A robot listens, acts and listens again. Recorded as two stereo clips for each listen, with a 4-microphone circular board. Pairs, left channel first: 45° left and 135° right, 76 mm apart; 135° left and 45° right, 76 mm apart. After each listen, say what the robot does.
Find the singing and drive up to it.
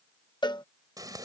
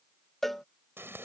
Keep listening.
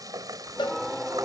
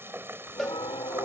Turn 135° left.
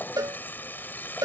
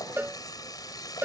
Keep listening.
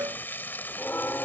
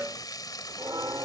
Turn 15° right.
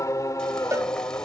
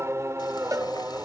Drive 1.0 m forward.
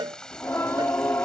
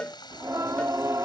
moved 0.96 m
Drive 1.0 m forward.
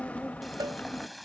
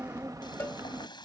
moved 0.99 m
Turn 20° right.
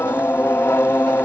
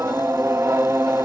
Drive 1.0 m forward.
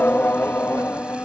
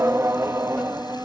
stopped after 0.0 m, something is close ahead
Turn 10° right.
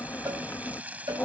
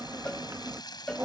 Arrived at the singing, straight ahead.